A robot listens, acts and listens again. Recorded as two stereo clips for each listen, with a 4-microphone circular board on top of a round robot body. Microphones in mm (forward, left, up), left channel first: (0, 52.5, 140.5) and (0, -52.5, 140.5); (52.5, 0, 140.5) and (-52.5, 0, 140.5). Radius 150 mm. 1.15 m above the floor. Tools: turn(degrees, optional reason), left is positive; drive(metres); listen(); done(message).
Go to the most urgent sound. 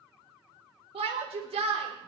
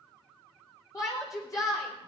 turn(degrees=-60, reason="The shout: 60° right.")
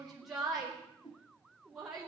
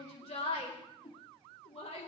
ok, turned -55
drive(metres=1.0)
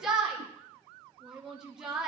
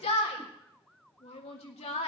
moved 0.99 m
drive(metres=1.0)
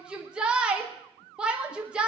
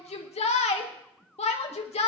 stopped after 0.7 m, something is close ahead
turn(degrees=-10, reason="The shout is now 10° right.")
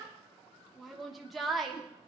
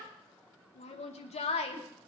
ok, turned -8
done("Arrived at the shout, straight ahead.")